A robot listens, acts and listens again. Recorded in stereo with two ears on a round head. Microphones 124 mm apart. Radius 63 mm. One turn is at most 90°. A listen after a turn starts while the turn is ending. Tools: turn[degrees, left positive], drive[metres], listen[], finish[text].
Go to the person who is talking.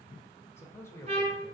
Thought: The man speaking: about 20° left or 160° left.
Action: turn[20]
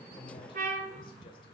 Action: listen[]
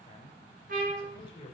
Thought: So it is at 135° left.
Action: turn[90]
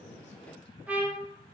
Thought: Nothing new. It was at 45° left.
Action: turn[45]
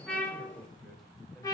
Action: drive[1.0]
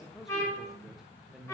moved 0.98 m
Action: drive[1.0]
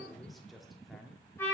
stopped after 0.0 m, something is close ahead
Action: finish[Arrived at the man speaking, straight ahead.]